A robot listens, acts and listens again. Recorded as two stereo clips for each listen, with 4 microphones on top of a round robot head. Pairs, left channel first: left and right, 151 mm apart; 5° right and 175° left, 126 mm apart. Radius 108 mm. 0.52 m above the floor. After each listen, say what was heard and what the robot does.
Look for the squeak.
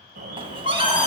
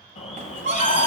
The squeak: 145° right. Turn 145° right.
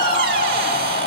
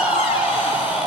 The squeak is now 65° right. Turn 65° right.
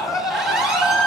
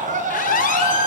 Found it: a squeak, straight ahead.